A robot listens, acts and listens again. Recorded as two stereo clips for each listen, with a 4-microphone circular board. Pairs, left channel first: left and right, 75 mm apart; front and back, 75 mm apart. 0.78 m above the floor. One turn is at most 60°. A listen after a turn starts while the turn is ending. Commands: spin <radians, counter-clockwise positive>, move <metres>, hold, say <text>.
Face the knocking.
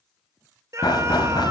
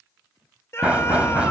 spin 1.05
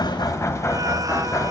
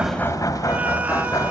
spin 0.70
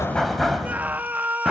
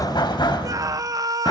say Found it: knocking, straight ahead, 2 to 4 m away.